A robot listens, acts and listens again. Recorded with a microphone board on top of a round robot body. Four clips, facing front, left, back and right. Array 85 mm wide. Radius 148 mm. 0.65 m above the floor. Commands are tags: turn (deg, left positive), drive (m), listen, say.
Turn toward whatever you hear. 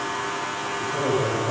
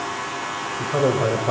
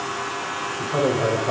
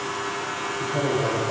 <turn deg="115"/>
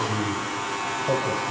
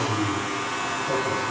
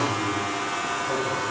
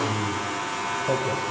<listen/>
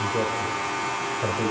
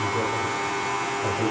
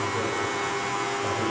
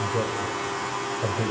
<listen/>
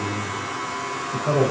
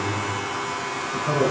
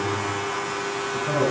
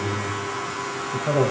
<turn deg="-50"/>
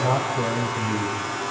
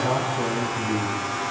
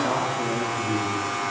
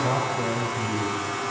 <turn deg="-15"/>
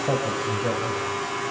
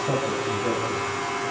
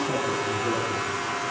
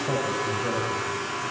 <listen/>
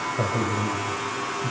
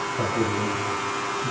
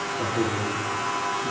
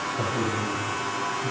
<listen/>
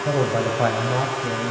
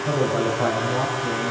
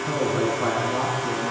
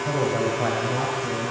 <say>Facing the man speaking.</say>